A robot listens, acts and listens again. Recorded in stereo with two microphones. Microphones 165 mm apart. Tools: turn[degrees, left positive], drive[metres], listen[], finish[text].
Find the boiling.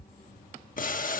Thought: The boiling: about 55° left or 125° left.
Action: turn[55]
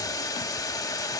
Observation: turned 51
Thought: So it is at 25° left.
Action: turn[25]
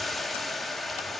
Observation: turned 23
Action: finish[Found it: boiling, straight ahead, 1 to 2 m away.]